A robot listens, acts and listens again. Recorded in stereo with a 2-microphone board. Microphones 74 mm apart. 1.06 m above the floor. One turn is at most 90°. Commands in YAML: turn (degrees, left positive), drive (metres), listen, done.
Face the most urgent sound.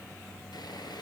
listen: true
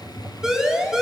turn: -30
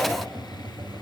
listen: true
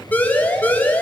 turn: 25
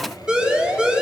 turn: -10
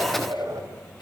listen: true
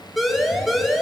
done: "Found it: a siren, straight ahead, over 4 m away."